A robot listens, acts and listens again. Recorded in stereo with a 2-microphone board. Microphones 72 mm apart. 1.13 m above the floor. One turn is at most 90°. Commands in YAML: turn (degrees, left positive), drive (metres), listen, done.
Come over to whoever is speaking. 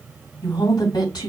turn: 65
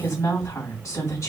turn: 45
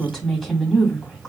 drive: 1.0
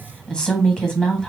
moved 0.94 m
turn: 10
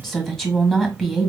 drive: 1.0
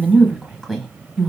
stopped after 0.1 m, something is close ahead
done: "I am next to the woman speaking."